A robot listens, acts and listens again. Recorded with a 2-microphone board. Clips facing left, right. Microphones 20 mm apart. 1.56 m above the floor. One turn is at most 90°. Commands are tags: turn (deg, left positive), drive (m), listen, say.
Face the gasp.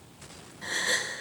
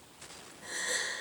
<turn deg="70"/>
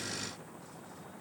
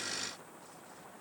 <listen/>
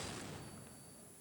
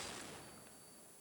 <say>I heard a gasp, but can't make it out now. It was about straight ahead or 40° left.</say>